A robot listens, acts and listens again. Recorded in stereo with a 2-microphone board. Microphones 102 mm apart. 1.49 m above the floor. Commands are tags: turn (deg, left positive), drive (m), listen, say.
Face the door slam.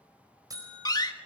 <turn deg="45"/>
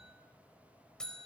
<listen/>
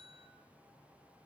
<say>I heard a door slam, but can't make it out now. It was about straight ahead or 90° left.</say>